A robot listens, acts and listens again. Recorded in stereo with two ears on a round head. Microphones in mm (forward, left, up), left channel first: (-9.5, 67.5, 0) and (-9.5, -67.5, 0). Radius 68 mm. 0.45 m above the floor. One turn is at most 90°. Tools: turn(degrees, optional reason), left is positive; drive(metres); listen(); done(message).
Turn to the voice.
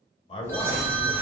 turn(degrees=35, reason="The man speaking: about 35° left or 145° left.")
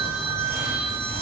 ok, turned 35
listen()
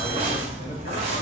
listen()
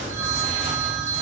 done("I heard a man speaking, but can't make it out now. It was about straight ahead or 110° left.")